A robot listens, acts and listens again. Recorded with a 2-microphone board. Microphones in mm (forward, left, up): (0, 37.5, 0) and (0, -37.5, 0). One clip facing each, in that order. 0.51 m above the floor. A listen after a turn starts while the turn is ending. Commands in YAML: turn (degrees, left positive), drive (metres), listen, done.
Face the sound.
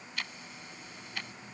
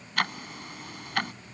turn: -65
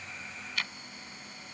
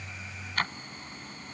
turn: -45
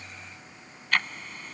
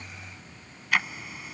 done: "Found it: ticking, straight ahead."